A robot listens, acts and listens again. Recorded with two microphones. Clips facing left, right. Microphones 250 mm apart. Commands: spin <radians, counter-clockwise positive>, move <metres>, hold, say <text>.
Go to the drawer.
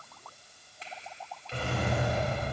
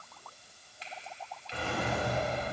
spin 0.79
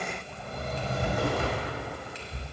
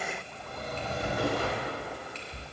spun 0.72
spin 1.66
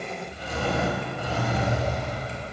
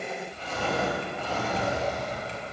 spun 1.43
spin 0.26
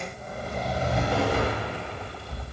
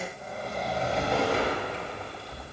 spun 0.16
move 1.0
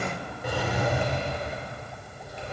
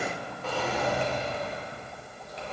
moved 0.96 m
spin 0.26
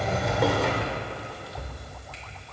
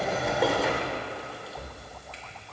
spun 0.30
move 1.0
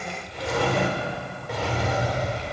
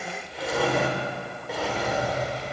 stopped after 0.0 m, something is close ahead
say I am next to the drawer.